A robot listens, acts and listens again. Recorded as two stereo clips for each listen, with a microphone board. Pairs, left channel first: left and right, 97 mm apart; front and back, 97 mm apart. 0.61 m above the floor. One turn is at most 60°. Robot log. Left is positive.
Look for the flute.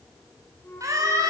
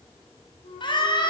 note: The flute: 20° left.
cmd yaw +20
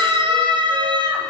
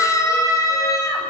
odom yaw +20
cmd idle
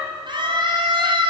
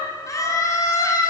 cmd idle
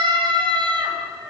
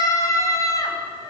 end: Facing where the flute came from. I can't hear it now.